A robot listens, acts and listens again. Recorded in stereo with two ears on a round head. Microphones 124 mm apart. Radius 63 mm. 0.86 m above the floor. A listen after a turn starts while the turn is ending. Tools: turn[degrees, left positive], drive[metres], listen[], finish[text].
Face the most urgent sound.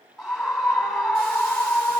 Action: turn[30]
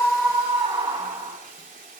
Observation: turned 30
Thought: So it is at 30° right.
Action: turn[-30]
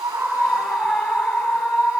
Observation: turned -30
Action: finish[Found it: a scream, straight ahead, over 4 m away.]